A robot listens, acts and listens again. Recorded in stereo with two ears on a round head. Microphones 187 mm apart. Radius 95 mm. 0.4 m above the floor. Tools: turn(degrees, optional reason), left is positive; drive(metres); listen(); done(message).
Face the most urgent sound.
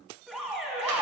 turn(degrees=30)
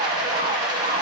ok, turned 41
listen()
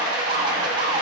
turn(degrees=-40, reason="So it is at 40° right.")
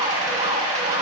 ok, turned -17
turn(degrees=-25, reason="The alarm is now 25° right.")
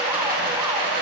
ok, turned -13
turn(degrees=-15, reason="Nothing new. It was at 15° right.")
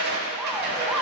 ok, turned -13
done("Found it: an alarm, straight ahead, 1 to 2 m away.")